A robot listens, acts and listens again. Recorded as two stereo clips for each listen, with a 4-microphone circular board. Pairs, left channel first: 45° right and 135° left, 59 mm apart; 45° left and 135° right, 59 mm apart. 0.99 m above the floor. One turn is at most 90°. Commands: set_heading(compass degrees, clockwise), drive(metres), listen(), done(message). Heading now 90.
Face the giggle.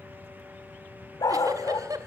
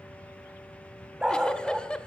set_heading(0)
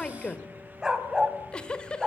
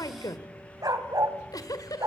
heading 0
set_heading(330)
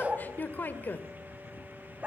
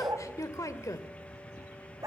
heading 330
set_heading(315)
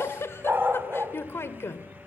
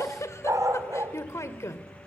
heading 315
done("Found it: a giggle, straight ahead, 1 to 2 m away.")